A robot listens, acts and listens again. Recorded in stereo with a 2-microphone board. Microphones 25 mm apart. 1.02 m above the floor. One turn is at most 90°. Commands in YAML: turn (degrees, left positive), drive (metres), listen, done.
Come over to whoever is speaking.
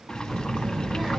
turn: -30
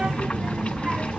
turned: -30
turn: -90
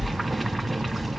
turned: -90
turn: -25
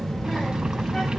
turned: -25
turn: 20
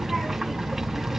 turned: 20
drive: 1.0
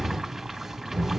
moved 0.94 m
drive: 1.0
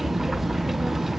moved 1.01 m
drive: 1.0
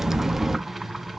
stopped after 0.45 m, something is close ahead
turn: -15
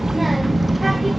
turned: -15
done: "I am next to the child speaking."